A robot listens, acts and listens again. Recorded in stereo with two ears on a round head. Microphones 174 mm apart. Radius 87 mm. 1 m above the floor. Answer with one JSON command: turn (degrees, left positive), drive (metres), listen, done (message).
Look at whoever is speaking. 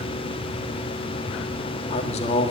{"turn": 35}
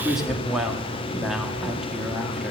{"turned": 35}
{"done": "Facing the woman speaking."}